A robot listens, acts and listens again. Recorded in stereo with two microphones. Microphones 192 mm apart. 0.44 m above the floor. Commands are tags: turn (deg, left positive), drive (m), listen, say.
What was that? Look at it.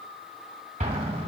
<turn deg="-35"/>
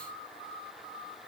<listen/>
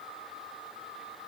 <say>I heard an explosion, but can't make it out now. It was about straight ahead or 110° right.</say>